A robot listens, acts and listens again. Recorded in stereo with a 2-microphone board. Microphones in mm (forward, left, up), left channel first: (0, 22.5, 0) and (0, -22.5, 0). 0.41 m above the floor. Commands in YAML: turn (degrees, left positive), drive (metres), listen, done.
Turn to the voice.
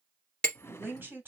turn: -45
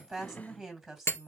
turn: -10
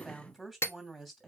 done: "Found it: a woman speaking, straight ahead, 2 to 4 m away."